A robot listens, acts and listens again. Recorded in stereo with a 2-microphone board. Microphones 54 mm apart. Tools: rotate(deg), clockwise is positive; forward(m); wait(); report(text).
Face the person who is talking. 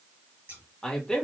rotate(-30)
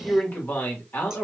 rotate(-135)
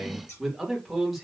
report("Facing the man speaking.")